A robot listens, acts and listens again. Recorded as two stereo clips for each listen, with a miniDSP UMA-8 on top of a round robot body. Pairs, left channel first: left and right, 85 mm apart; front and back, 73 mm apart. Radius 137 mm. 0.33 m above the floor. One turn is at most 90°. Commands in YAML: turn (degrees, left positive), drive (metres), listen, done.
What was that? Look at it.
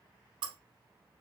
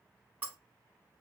turn: -90
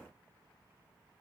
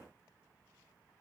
turn: -25
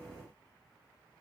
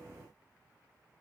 done: "Facing where the breaking glass came from. I can't hear it now."